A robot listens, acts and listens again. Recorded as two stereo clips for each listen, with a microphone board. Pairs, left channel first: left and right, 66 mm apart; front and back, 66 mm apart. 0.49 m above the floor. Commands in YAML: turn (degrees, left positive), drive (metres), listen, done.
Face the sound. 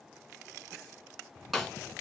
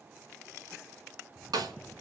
turn: 180
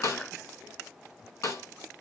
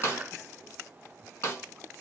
turn: 50
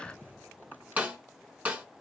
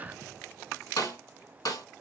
turn: -20
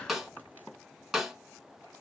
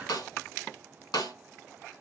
done: "Found it: a snare drum, straight ahead."